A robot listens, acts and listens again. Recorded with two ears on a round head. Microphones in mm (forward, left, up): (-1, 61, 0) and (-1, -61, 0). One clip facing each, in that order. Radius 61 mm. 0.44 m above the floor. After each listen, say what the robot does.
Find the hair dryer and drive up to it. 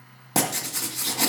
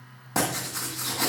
Keep listening.
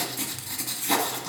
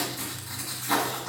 Keep listening.
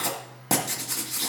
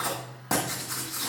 I can't make out a hair dryer, only writing.